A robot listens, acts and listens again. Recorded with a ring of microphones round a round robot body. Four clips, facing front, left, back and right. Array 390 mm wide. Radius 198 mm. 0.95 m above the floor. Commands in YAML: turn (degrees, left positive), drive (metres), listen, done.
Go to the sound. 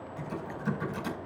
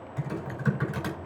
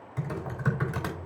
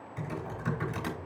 turn: 170
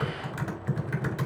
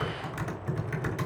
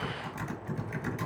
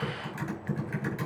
turn: 40
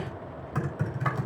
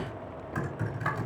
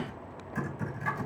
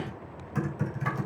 drive: 1.0
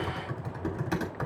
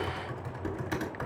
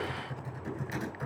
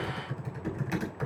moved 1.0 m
turn: 10
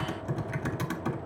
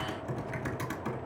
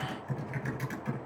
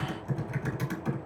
drive: 1.0
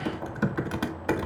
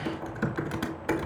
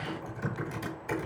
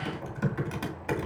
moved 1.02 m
turn: 10
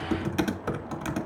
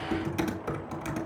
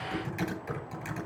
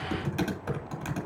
drive: 1.0
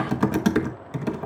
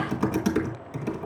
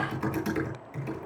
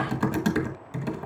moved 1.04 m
drive: 1.0
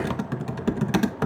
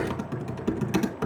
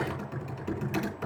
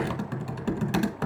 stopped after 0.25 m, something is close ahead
done: "Arrived at the typing on a keyboard, straight ahead."